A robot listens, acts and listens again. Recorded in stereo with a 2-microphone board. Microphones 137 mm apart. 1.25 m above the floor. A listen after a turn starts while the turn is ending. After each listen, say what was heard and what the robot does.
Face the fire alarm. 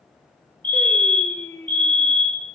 The fire alarm: about 40° right or 140° right. Turn 40° right.
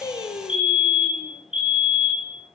So it is at 95° right. Turn 95° right.
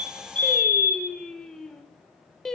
The fire alarm is now 20° left. Turn 20° left.
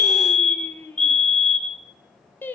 Found it: a fire alarm, straight ahead.